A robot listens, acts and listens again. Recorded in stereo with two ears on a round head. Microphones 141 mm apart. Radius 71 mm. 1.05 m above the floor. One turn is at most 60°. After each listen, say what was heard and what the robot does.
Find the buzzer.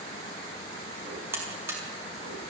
Turn 30° right.
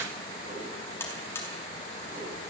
So it is at 15° left. Turn 15° left.
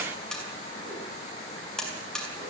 Facing the buzzer, over 4 m away.